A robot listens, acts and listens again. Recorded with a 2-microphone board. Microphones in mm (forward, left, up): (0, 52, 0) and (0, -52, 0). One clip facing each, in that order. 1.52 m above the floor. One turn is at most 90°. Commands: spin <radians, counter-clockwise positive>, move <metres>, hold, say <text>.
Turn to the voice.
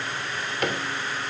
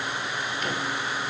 hold
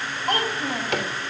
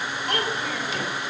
spin 0.70
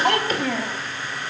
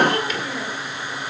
spin 1.57
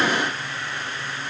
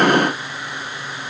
spin 0.17
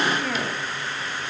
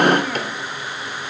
say Found it: a child speaking, straight ahead.